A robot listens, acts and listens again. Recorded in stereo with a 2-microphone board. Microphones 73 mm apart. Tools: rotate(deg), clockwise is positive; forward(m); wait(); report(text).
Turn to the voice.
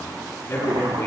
rotate(-40)
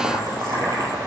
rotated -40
wait()
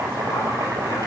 wait()
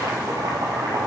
report("I heard a man speaking, but can't make it out now. It was about straight ahead or 100° left.")